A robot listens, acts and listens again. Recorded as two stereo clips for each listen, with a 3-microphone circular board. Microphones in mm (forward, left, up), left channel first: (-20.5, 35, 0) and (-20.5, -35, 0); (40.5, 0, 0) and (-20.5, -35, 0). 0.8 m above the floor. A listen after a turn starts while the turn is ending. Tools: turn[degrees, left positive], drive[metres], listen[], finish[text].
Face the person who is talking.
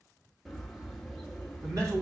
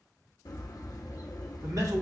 Thought: The man speaking: 125° right.
Action: turn[-125]
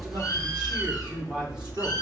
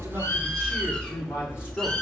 Thought: The man speaking is now 20° right.
Action: turn[-20]
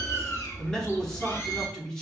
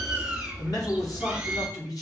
Thought: The man speaking is now 10° left.
Action: turn[10]
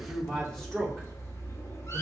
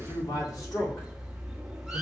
Action: finish[Facing the man speaking.]